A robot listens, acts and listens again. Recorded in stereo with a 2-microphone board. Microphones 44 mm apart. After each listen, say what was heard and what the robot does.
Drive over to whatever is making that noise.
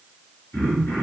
The throat clearing: about 55° left or 125° left. Turn 55° left.
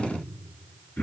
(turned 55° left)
So it is at 70° left. Turn 70° left.
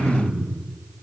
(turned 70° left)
The throat clearing is now 25° left. Turn 25° left.
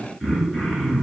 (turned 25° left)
Drive 1.0 m forward.
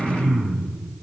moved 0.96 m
Drive 1.0 m forward.
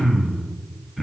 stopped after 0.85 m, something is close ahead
I am next to the throat clearing.